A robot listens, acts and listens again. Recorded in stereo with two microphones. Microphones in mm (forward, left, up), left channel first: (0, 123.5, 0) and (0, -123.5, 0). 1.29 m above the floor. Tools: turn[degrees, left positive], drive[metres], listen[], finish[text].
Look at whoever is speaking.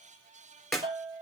Action: listen[]
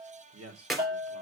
Thought: The man speaking: about 75° right or 105° right.
Action: turn[-75]
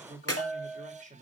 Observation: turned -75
Thought: So it is at 30° right.
Action: turn[-30]
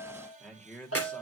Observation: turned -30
Action: finish[Found it: a man speaking, straight ahead.]